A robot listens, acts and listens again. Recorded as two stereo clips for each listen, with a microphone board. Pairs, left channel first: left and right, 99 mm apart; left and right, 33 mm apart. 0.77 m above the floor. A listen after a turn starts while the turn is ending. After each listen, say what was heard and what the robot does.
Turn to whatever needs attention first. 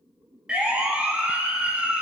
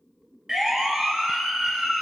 Turn 30° right.
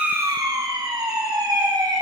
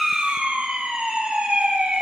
So it is at 140° right. Turn 140° right.
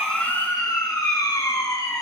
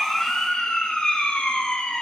The siren is now 35° left. Turn 35° left.
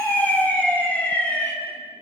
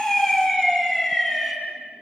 The siren is now 15° left. Turn 15° left.
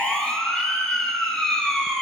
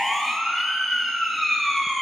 Facing the siren, over 4 m away.